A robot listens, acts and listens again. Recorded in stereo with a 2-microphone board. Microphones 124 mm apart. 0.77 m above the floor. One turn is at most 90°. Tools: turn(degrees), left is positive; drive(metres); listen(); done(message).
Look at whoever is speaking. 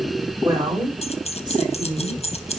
turn(degrees=-40)
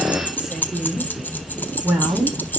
turn(degrees=-15)
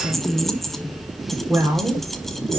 turn(degrees=-15)
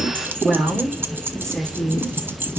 done("Facing the woman speaking, 2 to 4 m away.")